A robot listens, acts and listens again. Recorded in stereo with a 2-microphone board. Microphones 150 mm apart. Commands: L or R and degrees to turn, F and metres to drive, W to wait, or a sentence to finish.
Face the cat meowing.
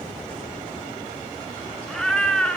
L30
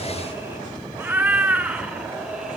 R30
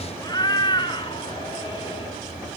L35
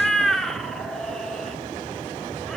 Found it: a cat meowing, straight ahead.